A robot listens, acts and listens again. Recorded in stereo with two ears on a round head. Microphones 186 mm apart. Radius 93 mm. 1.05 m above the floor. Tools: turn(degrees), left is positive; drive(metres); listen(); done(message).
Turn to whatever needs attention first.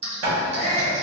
turn(degrees=-65)
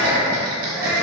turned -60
turn(degrees=-10)
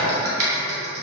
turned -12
listen()
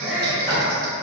done("Facing the shout.")